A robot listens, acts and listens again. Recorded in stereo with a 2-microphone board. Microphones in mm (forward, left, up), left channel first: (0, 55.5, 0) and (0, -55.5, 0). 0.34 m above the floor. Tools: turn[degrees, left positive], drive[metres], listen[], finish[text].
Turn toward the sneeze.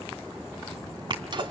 Thought: The sneeze: about 45° right or 135° right.
Action: turn[-45]
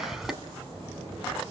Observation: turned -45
Action: finish[Found it: a sneeze, straight ahead.]